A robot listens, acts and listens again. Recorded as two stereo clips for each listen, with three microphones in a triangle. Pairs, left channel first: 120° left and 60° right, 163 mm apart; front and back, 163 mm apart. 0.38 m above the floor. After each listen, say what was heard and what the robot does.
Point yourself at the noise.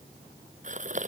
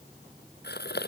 The gasp: 15° right. Turn 15° right.
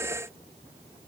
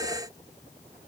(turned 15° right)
Facing where the gasp came from. I can't hear it now.